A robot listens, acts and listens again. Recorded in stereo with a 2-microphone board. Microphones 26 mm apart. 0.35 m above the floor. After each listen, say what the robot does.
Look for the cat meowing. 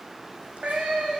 Turn 60° right.
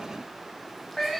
Turn 15° left.
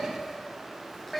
Facing the cat meowing.